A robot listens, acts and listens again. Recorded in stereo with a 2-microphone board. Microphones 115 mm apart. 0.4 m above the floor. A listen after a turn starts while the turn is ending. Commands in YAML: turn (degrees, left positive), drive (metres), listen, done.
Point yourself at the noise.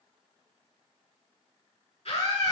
turn: 60
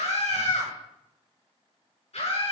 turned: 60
turn: 60
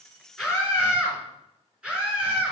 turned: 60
turn: -10
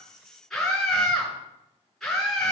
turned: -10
done: "Facing the scream."